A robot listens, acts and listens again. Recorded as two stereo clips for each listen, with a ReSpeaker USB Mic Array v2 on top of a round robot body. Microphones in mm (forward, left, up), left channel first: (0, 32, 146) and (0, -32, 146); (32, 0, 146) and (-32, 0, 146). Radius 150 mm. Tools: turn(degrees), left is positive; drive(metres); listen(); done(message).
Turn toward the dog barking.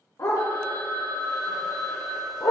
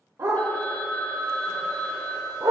turn(degrees=130)
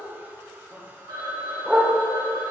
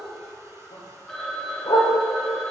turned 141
turn(degrees=-10)
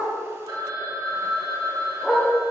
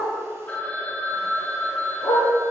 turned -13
done("Facing the dog barking.")